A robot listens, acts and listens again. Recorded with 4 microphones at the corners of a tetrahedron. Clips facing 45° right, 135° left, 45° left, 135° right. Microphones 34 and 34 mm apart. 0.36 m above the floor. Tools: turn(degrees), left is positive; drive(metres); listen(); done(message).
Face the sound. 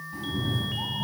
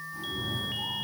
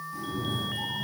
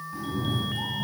turn(degrees=-75)
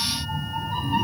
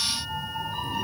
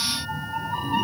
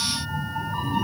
done("Found it: a cat meowing, straight ahead, under 1 m away.")